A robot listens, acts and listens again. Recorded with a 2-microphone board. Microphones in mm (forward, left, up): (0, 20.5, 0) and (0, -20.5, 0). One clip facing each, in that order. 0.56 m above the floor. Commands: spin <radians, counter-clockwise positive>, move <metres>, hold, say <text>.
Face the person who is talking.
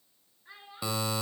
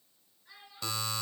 spin 0.52
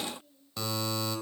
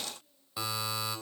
spin 2.09
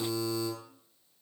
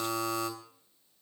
hold
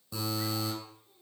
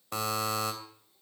hold
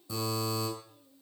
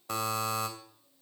spin 0.70
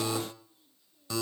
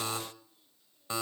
hold
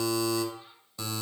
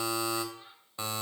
spin -0.26
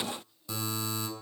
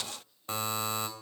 hold
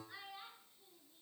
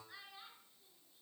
say Found it: a child speaking, straight ahead, over 4 m away.